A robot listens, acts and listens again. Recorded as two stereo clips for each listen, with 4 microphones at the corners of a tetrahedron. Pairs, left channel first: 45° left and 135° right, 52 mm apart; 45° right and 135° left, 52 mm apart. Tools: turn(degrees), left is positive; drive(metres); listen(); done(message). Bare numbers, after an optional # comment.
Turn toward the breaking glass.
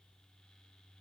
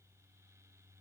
listen()
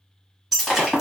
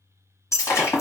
# The breaking glass: 45° right.
turn(-45)
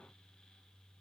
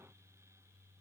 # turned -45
done("Facing where the breaking glass came from. I can't hear it now.")